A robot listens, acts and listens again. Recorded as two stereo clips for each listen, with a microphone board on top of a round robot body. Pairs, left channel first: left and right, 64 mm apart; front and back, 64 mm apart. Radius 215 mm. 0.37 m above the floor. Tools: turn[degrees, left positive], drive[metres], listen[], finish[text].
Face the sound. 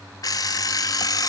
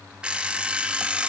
Thought: The alarm clock: 105° left.
Action: turn[105]
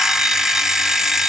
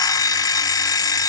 Action: finish[Facing the alarm clock, 1 to 2 m away.]